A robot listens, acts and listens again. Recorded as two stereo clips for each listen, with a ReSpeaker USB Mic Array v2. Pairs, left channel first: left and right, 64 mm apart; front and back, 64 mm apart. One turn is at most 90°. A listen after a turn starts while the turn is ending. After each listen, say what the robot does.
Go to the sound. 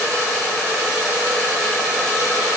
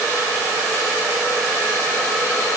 Keep listening.
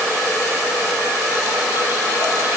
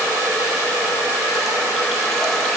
Keep listening.
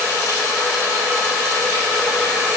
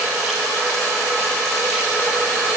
I can't make out anything to turn to.